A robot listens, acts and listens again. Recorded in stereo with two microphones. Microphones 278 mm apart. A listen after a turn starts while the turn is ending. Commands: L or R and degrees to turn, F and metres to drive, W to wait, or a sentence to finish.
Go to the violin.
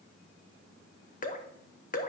W
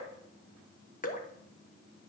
W
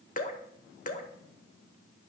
I can't make out a violin to turn to.